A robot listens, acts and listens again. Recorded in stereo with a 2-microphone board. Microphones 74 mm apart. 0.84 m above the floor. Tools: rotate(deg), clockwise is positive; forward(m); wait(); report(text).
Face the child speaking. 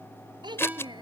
rotate(90)
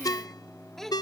report("Found it: a child speaking, straight ahead.")